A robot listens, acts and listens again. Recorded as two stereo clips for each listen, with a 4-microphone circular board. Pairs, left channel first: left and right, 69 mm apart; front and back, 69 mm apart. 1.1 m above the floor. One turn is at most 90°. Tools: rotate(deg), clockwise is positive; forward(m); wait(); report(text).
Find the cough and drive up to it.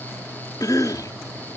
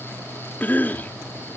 rotate(-65)
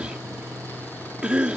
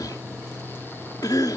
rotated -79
rotate(15)
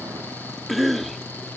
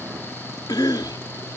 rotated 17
forward(1.0)
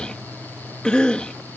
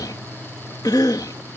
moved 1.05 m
rotate(-15)
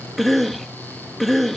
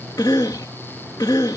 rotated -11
forward(1.0)
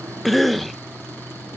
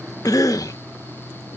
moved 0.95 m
forward(1.0)
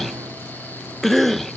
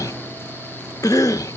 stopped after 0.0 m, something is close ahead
report("I am next to the cough.")